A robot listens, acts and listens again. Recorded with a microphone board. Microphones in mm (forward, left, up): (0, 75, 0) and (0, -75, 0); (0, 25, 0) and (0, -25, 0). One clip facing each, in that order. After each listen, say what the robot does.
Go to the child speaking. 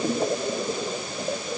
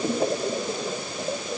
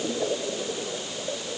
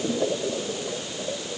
Keep listening.
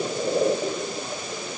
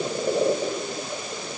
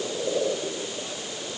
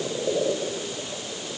Keep listening.
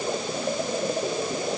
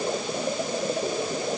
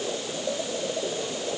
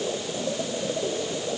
I can't make out a child speaking to turn to.